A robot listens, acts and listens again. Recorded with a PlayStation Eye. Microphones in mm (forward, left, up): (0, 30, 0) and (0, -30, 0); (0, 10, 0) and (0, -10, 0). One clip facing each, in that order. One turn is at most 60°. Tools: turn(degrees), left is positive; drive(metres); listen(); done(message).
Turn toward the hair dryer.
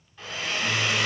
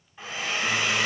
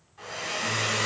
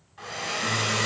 turn(degrees=-20)
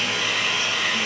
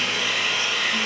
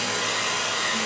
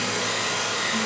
done("Found it: a hair dryer, straight ahead.")